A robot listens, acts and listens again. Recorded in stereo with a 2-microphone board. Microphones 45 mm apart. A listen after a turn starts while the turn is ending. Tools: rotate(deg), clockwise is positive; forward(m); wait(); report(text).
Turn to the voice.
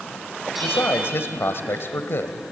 rotate(-60)
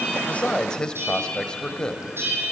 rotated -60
rotate(-20)
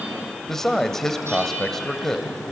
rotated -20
rotate(-10)
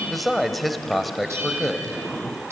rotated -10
report("Facing the man speaking, 1 to 2 m away.")